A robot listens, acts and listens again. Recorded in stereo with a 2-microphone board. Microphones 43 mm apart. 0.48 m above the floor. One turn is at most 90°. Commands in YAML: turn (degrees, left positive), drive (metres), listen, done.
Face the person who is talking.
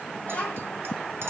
turn: 30
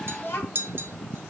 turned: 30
turn: 90
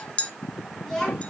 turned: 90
turn: 15
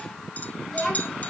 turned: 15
turn: 10
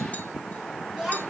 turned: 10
done: "Facing the child speaking, 2 to 4 m away."